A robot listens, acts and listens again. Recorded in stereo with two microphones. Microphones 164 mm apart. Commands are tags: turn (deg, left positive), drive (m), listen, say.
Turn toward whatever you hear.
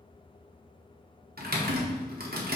<turn deg="-70"/>
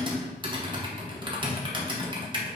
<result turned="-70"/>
<turn deg="-30"/>
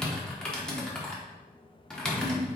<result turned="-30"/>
<say>Found it: typing on a keyboard, straight ahead.</say>